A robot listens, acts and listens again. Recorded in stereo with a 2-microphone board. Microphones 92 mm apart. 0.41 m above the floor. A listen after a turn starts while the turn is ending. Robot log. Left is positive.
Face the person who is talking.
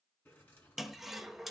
cmd idle
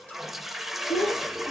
note: The child speaking: about 75° left or 105° left.
cmd yaw +75
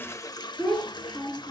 end: Found it: a child speaking, straight ahead, over 4 m away.